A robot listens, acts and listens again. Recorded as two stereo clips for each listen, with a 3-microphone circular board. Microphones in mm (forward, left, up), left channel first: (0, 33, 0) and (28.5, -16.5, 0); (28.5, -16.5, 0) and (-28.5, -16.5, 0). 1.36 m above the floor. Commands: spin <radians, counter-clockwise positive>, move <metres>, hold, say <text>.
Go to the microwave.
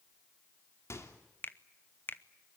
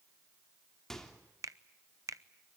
spin 1.40
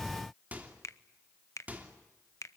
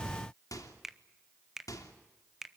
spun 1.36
move 1.0
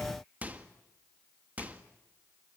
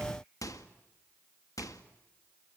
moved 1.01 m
move 1.0
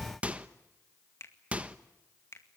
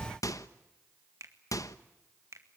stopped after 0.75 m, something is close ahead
spin 0.17
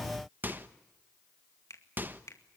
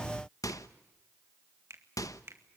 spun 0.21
say Arrived at the microwave, straight ahead.